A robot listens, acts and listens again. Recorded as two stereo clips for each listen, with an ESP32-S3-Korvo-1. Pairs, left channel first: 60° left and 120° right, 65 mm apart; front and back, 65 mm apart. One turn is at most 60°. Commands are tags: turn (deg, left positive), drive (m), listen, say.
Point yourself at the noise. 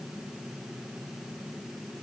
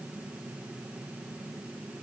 <listen/>
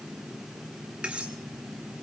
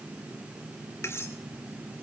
<turn deg="-50"/>
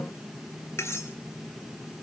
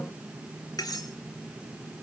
<turn deg="15"/>
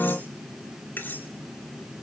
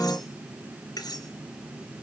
<say>Facing the cutlery clinking, 2 to 4 m away.</say>